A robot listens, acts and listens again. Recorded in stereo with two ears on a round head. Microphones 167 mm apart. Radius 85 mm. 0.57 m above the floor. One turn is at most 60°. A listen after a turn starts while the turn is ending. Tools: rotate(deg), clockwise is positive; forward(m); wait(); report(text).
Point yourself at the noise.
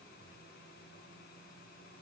wait()
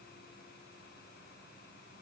wait()
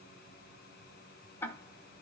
rotate(-30)
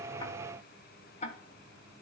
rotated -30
rotate(-60)
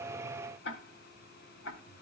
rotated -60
rotate(-60)
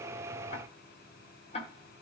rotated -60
rotate(-35)
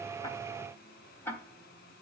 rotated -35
rotate(-10)
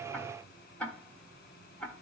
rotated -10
report("Facing the ticking, 1 to 2 m away.")